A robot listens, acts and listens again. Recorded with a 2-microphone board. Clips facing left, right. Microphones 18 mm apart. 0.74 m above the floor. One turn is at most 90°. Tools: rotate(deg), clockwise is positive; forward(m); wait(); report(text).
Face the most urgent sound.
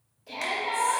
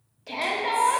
rotate(40)
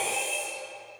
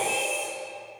rotate(90)
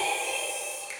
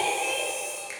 rotate(20)
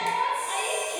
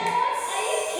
rotate(10)
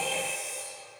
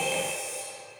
report("Found it: a shout, straight ahead, 1 to 2 m away.")